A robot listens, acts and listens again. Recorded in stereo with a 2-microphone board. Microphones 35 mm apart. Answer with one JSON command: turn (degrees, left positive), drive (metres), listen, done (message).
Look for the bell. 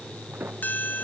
{"turn": 55}
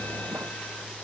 {"listen": true}
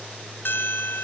{"turn": 70}
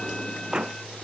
{"listen": true}
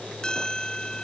{"turn": 20}
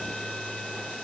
{"listen": true}
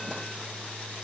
{"listen": true}
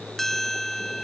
{"done": "Facing the bell."}